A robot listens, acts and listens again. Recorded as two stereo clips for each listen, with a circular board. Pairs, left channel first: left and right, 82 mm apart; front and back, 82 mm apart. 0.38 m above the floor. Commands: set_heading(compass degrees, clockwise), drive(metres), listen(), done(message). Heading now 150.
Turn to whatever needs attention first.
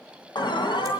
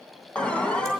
set_heading(75)
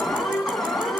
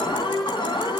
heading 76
done("Found it: an alarm, straight ahead, 2 to 4 m away.")